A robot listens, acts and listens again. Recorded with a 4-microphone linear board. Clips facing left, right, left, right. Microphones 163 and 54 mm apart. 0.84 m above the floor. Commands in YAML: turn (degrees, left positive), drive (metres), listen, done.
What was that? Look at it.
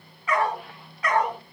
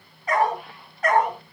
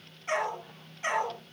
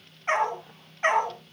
turn: -50
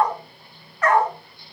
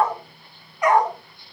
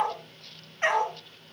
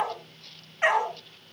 turn: -20
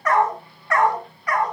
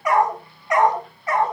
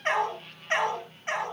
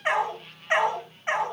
turn: -25
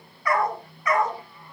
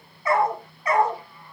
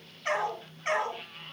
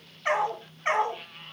turn: -30
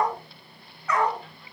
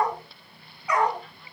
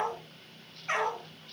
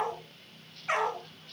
turn: -15
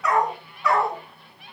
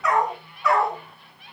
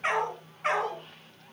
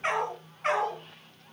done: "Found it: a dog barking, straight ahead, 2 to 4 m away."